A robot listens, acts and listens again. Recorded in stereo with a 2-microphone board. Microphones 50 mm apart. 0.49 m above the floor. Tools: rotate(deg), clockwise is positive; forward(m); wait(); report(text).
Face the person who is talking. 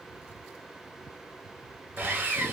wait()
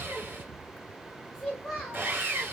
rotate(-30)
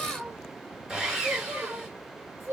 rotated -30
rotate(55)
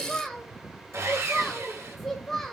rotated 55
report("Found it: a child speaking, straight ahead, 1 to 2 m away.")